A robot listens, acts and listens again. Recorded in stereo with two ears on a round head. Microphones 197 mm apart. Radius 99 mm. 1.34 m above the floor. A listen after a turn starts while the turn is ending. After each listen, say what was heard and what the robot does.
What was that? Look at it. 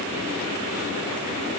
Keep listening.
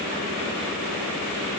Keep listening.
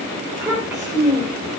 Turn 30° right.
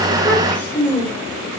So it is at 15° left. Turn 15° left.
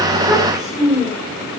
Found it: a child speaking, straight ahead, 2 to 4 m away.